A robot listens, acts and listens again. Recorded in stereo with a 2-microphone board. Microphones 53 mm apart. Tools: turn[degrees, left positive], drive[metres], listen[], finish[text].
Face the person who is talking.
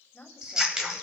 Thought: The woman speaking: about 25° left or 155° left.
Action: turn[25]
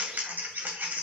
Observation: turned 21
Action: listen[]
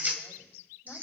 Action: listen[]
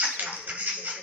Action: finish[I heard a woman speaking, but can't make it out now. It was about 5° left or 135° left.]